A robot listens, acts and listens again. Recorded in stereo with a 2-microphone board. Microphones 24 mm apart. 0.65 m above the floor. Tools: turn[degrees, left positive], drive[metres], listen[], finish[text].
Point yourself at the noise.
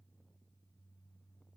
Action: listen[]
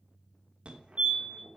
Thought: The fire alarm: about 55° right or 125° right.
Action: turn[-55]
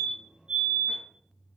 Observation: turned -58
Thought: So it is at 50° right.
Action: turn[-50]
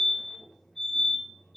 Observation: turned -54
Action: finish[Found it: a fire alarm, straight ahead, 2 to 4 m away.]